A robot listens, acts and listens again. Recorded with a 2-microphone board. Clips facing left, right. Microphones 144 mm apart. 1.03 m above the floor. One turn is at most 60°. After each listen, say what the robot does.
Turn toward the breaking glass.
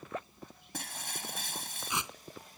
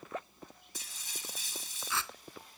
Turn 60° left.
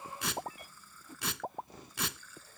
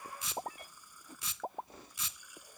Keep listening.
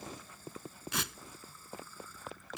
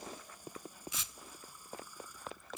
I heard breaking glass, but can't make it out now. It was about 5° left or 55° left.